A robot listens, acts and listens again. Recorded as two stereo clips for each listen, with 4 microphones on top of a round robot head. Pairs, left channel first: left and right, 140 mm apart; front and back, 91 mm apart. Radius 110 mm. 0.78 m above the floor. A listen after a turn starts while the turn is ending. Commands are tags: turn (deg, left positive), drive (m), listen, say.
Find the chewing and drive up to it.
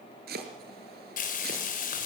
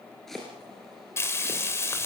<listen/>
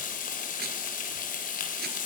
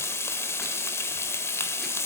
<listen/>
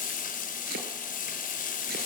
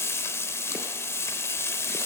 <say>I can't make out chewing, only frying and chopping.</say>